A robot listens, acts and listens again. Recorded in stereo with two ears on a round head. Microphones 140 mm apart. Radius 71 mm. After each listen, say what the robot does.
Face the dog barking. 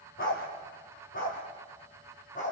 Turn 50° left.
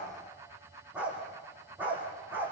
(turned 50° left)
Turn 10° right.
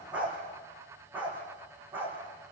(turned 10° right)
Turn 10° right.
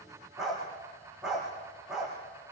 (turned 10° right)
Found it: a dog barking, straight ahead, over 4 m away.